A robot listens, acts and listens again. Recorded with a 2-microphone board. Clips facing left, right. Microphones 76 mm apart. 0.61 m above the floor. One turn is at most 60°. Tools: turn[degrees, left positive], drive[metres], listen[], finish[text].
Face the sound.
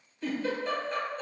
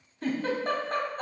Thought: The giggle: about 45° right or 135° right.
Action: turn[-45]
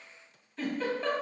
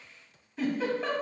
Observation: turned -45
Action: finish[Found it: a giggle, straight ahead, 1 to 2 m away.]